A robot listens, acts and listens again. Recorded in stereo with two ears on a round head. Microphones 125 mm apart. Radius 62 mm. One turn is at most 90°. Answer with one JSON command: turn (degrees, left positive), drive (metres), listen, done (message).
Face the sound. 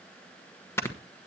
{"turn": 20}
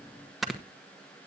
{"done": "Found it: snoring, straight ahead."}